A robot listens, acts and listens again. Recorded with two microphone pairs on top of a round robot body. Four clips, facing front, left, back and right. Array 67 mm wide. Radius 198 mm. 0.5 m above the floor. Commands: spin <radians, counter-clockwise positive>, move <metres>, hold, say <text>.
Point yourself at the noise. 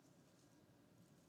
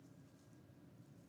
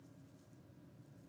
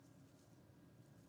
hold
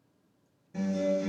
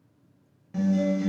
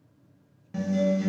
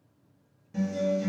spin 2.62
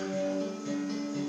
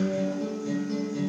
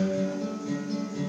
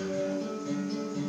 spin -0.35
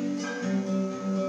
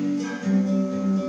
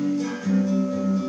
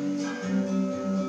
say Found it: a guitar, straight ahead, 1 to 2 m away.